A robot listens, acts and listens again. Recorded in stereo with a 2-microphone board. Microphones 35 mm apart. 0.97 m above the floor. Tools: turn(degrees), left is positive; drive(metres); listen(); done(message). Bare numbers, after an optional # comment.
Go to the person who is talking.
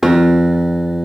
listen()
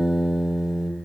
listen()
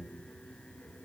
done("I can't make out anyone speaking, only a guitar.")